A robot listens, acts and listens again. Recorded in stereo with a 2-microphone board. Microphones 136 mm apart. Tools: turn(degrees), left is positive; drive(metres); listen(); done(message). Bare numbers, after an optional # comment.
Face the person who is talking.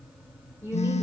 # The woman speaking: about 20° right or 160° right.
turn(-20)
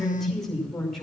done("Facing the woman speaking.")